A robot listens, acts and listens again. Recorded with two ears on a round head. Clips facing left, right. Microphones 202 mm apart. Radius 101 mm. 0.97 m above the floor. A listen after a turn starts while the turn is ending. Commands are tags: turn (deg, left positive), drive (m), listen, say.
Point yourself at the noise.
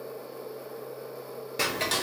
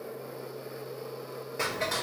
<turn deg="45"/>
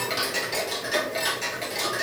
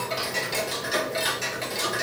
<say>Found it: ticking, straight ahead.</say>